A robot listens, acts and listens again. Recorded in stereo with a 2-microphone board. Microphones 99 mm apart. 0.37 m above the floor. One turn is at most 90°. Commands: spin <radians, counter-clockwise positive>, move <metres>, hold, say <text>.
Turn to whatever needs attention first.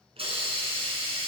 hold
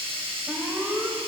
spin -0.35
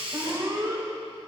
spin -1.57
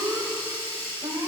spin -0.79
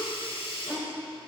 hold
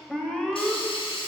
say Found it: an alarm, straight ahead, 1 to 2 m away.